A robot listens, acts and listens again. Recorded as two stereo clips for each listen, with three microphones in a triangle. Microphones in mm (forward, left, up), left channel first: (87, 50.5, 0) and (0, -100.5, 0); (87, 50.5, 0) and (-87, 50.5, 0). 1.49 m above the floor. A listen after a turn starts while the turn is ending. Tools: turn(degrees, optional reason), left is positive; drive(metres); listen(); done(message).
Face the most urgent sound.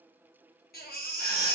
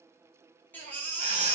turn(degrees=80, reason="The baby crying: 80° left.")
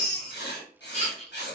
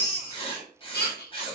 turn(degrees=10, reason="The baby crying is now 10° left.")
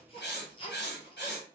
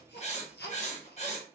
done("Facing the baby crying, under 1 m away.")